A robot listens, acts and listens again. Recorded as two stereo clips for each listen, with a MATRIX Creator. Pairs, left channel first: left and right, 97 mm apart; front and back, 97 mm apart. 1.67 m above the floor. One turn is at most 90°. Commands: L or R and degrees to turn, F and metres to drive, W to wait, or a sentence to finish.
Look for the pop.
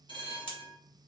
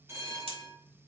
L90
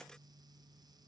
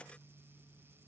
L75
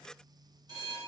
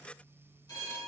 Facing where the pop came from. I can't hear it now.